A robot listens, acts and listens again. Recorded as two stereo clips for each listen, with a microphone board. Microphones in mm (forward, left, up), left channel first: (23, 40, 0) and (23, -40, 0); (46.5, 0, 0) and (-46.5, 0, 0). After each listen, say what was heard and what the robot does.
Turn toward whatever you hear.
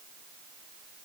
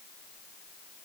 Keep listening.
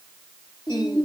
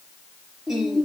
The singing: 95° left. Turn 95° left.
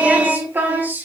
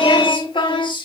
The singing is now 25° right. Turn 25° right.
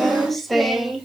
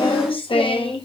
Found it: singing, straight ahead.